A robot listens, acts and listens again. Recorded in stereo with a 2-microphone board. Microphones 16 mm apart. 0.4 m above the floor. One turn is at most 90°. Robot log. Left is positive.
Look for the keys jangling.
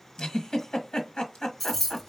cmd yaw +30
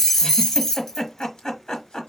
note: So it is at 150° left.
cmd yaw +90
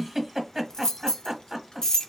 note: The keys jangling is now 50° left.
cmd yaw +50
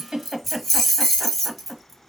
end: Found it: keys jangling, straight ahead, 1 to 2 m away.